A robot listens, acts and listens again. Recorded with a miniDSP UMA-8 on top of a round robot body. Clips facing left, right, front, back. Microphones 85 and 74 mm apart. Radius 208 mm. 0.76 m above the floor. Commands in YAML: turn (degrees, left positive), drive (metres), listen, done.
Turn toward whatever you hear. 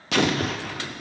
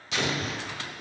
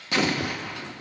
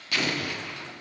turn: 65
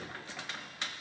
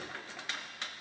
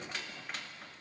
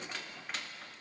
done: "I heard an explosion from this way, but can't make it out now."